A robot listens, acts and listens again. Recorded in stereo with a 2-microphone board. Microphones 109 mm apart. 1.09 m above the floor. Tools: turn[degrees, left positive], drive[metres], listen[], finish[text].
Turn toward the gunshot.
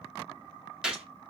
Action: turn[-30]
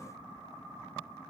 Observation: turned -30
Action: listen[]
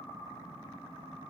Action: finish[I heard a gunshot, but can't make it out now. It was about 25° left or 145° right.]